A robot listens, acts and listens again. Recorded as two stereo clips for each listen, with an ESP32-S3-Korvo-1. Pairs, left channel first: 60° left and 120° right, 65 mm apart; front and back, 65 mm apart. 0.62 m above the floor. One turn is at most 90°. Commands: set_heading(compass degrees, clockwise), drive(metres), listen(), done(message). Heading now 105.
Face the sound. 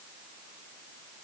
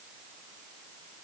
listen()
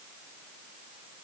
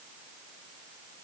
listen()
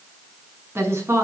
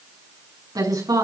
set_heading(195)
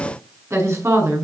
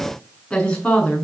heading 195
set_heading(270)
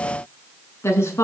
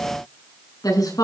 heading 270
set_heading(260)
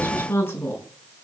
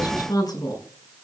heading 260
done("Found it: a woman speaking, straight ahead, over 4 m away.")